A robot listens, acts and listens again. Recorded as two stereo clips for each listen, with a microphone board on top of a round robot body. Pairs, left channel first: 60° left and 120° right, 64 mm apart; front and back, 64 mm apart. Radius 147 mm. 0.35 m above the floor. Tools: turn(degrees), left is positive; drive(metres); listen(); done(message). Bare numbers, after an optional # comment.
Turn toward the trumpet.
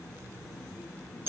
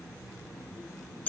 listen()
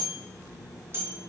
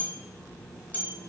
listen()
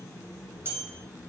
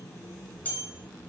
done("I can't make out a trumpet, only a bell.")